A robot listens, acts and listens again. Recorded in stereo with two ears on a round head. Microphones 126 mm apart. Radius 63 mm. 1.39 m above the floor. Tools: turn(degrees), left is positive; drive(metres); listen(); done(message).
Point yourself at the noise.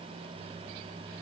listen()
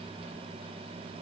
listen()
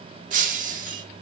turn(degrees=-60)
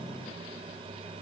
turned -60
listen()
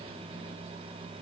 done("I heard breaking glass, but can't make it out now. It was about straight ahead or 60° right.")